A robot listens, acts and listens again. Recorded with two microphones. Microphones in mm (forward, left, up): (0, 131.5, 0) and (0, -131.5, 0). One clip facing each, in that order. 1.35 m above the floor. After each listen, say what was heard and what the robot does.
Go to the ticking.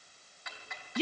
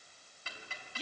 The ticking: about 35° right or 145° right. Turn 35° right.
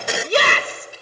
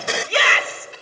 So it is at 110° right. Turn 110° right.
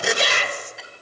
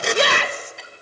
Drive 1.0 m forward.
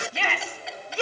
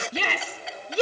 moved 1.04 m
Drive 1.0 m forward.
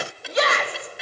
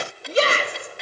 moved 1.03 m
Drive 1.0 m forward.
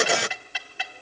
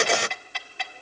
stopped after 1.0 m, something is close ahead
Arrived at the ticking, straight ahead.